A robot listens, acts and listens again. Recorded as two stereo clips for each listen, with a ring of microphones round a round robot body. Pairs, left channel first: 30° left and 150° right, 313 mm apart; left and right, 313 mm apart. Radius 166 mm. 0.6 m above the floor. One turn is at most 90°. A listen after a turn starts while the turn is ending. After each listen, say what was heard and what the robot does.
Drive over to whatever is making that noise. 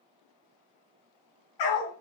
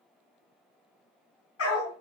The dog barking: 40° left. Turn 40° left.
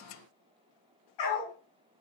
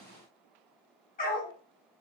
The dog barking is now 25° left. Turn 25° left.
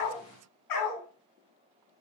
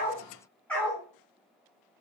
Drive 1.0 m forward.
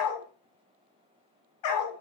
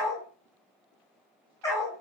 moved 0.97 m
The dog barking is now 10° left. Turn 10° left.
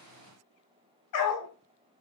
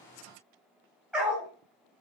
Drive 1.0 m forward.
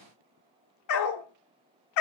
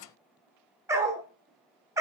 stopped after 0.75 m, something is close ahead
The dog barking is now 10° right. Turn 10° right.
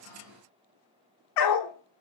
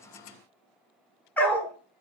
I am next to the dog barking.